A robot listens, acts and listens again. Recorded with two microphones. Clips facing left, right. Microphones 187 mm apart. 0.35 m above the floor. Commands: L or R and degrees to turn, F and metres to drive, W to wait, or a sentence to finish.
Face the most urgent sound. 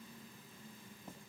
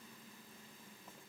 W
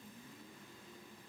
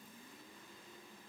W
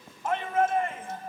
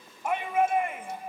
R30
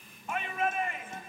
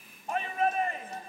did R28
R135
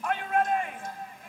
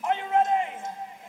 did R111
R25
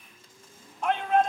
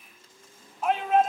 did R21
Found it: a shout, straight ahead, 2 to 4 m away.